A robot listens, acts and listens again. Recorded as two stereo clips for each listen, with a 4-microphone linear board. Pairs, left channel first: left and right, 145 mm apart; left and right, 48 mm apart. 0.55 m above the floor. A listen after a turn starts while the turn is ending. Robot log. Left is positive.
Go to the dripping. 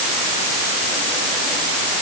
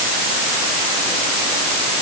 cmd idle
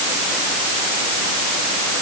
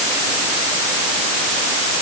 cmd idle
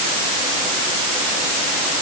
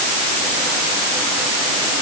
end: I can't make out dripping to turn to.